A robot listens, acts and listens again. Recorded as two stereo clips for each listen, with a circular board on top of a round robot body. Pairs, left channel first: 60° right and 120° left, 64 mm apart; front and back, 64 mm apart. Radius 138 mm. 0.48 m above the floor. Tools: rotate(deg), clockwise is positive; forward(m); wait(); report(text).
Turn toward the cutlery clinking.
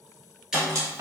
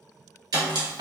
rotate(-170)
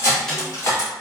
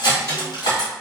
rotate(10)
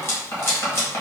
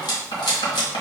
report("Found it: cutlery clinking, straight ahead.")